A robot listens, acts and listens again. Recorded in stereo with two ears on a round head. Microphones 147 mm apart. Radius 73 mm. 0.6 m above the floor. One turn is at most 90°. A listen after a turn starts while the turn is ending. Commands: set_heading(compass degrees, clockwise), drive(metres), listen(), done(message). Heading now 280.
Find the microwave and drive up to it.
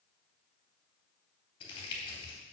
listen()
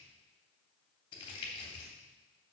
listen()
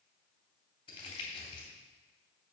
done("I can't make out a microwave, only crumpling.")